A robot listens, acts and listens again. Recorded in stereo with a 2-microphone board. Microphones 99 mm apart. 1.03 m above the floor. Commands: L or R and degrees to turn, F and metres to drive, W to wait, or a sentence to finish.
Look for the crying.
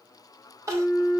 R30
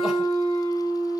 W
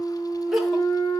Facing the crying, 1 to 2 m away.